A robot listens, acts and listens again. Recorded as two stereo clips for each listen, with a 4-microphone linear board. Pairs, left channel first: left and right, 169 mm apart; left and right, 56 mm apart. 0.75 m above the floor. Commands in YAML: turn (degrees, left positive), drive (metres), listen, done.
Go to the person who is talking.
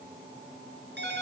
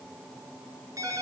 listen: true
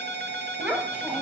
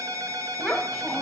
turn: -30
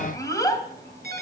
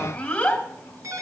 turn: 20
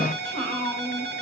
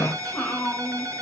drive: 1.0
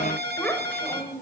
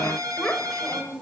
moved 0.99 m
turn: 10
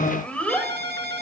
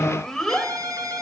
drive: 1.0
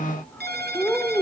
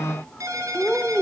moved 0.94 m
turn: 10
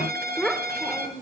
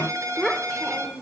drive: 1.0
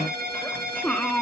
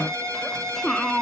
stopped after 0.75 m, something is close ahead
turn: 10
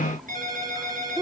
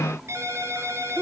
done: "Arrived at the child speaking, straight ahead."